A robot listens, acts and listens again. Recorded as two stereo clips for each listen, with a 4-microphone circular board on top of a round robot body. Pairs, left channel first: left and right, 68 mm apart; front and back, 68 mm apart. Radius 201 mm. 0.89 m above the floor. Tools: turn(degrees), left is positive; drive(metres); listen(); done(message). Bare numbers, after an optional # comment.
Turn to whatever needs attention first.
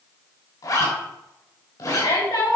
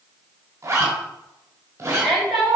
# The shout: 90° left.
turn(90)
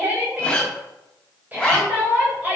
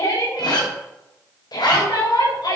# The shout is now 25° right.
turn(-25)
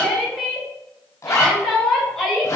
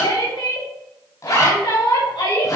done("Found it: a shout, straight ahead, over 4 m away.")